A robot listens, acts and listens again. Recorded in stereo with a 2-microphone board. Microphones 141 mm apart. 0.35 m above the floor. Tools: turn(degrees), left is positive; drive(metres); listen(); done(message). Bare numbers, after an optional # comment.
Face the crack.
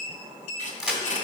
turn(-30)
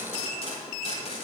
listen()
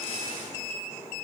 done("I heard a crack, but can't make it out now. It was about 25° left or 145° right.")